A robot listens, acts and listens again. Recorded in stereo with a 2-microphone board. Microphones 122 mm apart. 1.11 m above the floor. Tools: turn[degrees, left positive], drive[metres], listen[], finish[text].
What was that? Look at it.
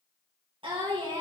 Thought: The singing: about 40° right or 140° right.
Action: turn[-40]
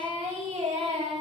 Thought: So it is at 110° right.
Action: turn[-110]
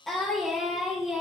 Action: finish[Found it: singing, straight ahead, over 4 m away.]